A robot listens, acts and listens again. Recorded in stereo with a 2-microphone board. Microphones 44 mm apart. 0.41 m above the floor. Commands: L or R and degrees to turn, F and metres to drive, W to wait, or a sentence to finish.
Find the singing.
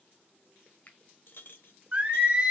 R25
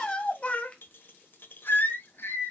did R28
L65
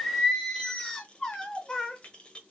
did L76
L20
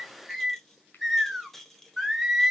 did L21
Facing the singing.